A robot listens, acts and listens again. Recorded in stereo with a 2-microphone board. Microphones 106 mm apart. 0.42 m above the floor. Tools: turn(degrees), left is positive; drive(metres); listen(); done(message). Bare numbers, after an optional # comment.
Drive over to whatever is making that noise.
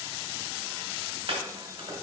# The chopping: about 55° right or 125° right.
turn(-55)
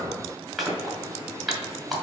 drive(1.0)
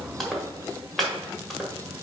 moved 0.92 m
drive(1.0)
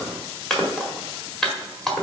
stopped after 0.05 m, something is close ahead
done("Arrived at the chopping, straight ahead.")